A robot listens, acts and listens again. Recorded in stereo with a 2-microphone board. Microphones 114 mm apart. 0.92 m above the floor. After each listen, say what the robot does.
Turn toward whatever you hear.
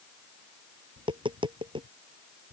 Turn 45° right.
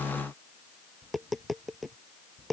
Found it: tapping, straight ahead.